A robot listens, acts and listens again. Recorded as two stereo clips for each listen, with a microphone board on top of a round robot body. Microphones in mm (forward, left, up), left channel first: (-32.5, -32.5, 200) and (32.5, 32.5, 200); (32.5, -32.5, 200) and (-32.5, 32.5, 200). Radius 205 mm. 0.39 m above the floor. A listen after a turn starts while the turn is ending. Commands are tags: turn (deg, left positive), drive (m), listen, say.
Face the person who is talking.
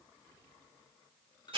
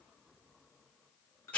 <listen/>
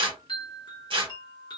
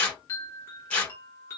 <listen/>
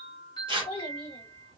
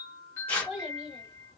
<turn deg="-140"/>
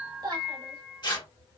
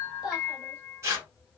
<listen/>
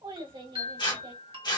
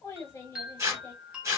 <turn deg="20"/>
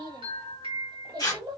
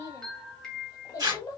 <turn deg="10"/>
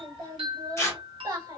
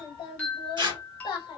<say>Found it: a child speaking, straight ahead, 2 to 4 m away.</say>